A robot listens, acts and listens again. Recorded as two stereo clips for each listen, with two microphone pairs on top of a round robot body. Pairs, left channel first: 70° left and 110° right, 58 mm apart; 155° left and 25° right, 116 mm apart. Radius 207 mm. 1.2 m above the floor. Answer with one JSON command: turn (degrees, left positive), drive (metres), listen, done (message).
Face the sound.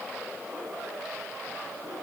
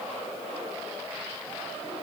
{"listen": true}
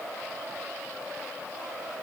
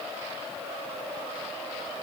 {"listen": true}
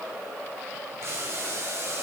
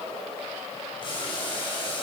{"turn": -155}
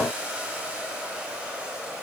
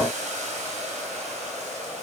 {"turn": -40}
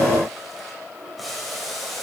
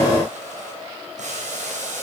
{"turn": -20}
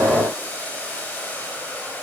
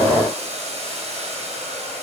{"done": "Facing the boiling, over 4 m away."}